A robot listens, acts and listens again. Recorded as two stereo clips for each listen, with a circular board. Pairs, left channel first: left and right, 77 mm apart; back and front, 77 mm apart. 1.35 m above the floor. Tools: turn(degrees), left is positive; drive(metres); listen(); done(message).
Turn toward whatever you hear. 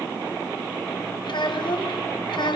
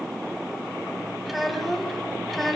turn(degrees=90)
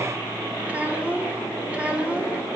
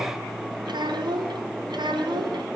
turn(degrees=-15)
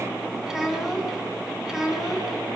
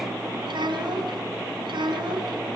done("Found it: a child speaking, straight ahead.")